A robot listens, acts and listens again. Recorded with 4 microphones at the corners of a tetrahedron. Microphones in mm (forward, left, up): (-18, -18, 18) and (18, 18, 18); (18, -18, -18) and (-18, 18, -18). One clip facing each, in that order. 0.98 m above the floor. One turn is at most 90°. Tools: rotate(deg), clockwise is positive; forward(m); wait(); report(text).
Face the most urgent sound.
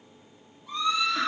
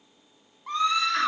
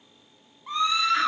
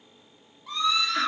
rotate(-15)
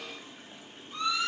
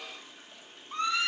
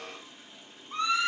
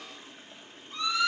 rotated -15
report("Found it: a scream, straight ahead.")